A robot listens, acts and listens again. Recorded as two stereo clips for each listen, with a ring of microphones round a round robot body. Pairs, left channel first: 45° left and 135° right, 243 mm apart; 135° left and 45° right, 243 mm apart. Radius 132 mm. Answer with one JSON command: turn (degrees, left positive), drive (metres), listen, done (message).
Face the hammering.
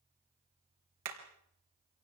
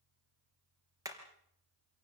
{"turn": -120}
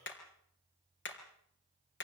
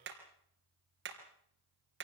{"done": "Found it: hammering, straight ahead."}